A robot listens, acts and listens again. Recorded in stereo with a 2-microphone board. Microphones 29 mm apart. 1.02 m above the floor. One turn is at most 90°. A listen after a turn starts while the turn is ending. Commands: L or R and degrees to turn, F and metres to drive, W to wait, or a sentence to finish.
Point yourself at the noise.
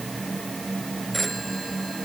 L30
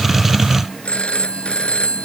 L90
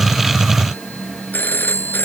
L85
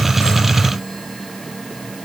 W
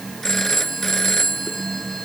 L15
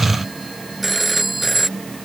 Found it: a phone ringing, straight ahead.